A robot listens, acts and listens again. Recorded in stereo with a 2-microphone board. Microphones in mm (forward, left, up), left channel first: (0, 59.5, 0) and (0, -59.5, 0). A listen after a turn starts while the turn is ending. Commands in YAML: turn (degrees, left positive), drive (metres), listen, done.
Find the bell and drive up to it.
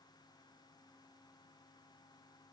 listen: true
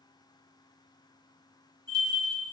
turn: 20
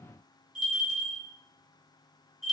drive: 1.0
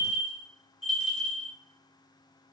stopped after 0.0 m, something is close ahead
done: "Something is in my way. I am facing the bell but have not reached it."